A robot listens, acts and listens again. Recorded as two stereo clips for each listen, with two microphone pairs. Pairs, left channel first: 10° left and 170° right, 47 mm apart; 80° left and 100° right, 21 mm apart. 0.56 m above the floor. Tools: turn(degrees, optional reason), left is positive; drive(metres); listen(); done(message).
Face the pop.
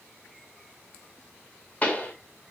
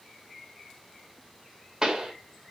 turn(degrees=-45, reason="The pop: 45° right.")
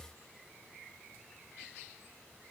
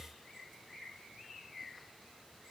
done("I heard a pop from this way, but can't make it out now.")